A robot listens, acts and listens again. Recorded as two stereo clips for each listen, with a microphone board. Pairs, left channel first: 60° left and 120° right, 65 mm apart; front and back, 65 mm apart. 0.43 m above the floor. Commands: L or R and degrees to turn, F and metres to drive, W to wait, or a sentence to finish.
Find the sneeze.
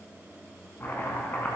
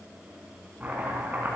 W
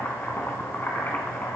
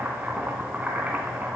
W
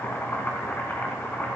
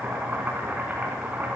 I can't make out a sneeze, only chopping.